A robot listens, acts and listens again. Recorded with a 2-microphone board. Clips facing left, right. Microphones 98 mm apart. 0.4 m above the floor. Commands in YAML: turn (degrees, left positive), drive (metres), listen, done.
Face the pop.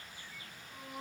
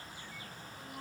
listen: true
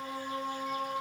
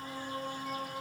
listen: true
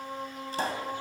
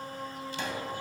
turn: 40
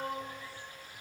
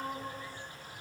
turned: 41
listen: true
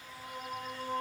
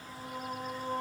done: "I heard a pop, but can't make it out now. It was about straight ahead or 100° left."